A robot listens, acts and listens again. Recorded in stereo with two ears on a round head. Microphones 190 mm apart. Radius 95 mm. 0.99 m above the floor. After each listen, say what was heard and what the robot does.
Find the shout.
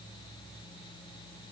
Keep listening.
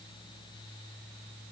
Keep listening.
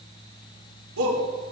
The shout: about 75° right or 105° right. Turn 75° right.
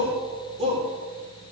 So it is at 30° right. Turn 30° right.
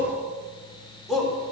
Facing the shout.